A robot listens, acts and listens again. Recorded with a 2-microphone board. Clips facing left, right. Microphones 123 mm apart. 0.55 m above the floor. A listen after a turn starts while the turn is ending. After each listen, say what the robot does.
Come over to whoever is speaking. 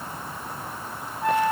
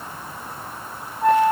Keep listening.
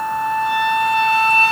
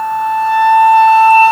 Keep listening.
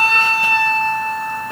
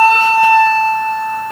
I can't make out anyone speaking, only a flute.